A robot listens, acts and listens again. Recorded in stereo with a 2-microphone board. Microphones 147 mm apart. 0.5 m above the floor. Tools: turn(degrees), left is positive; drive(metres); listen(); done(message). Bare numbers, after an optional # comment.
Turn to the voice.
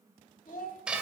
turn(90)
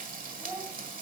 # So it is at 10° right.
turn(-10)
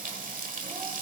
listen()
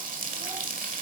listen()
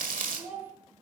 # The child speaking is now 15° right.
turn(-15)
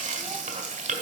listen()
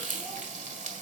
listen()
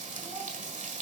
done("Facing where the child speaking came from. I can't hear it now.")